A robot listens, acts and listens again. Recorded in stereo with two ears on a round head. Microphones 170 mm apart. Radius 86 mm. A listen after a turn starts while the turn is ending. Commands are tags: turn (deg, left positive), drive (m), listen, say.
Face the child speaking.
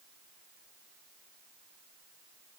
<listen/>
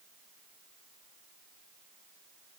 <listen/>
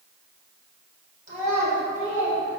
<turn deg="-40"/>
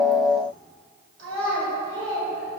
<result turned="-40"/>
<turn deg="-105"/>
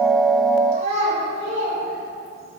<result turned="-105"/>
<turn deg="-35"/>
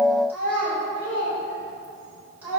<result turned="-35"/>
<turn deg="-10"/>
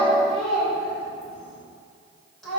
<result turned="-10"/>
<say>Found it: a child speaking, straight ahead.</say>